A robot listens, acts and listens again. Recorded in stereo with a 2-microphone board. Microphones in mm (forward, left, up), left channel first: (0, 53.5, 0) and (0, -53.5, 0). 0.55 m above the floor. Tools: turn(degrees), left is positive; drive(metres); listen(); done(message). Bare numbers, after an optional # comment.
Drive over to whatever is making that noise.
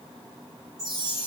# The chime: about 35° right or 145° right.
turn(-35)
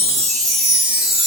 drive(1.0)
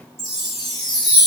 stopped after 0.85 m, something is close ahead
done("Blocked. The chime is further on, straight ahead.")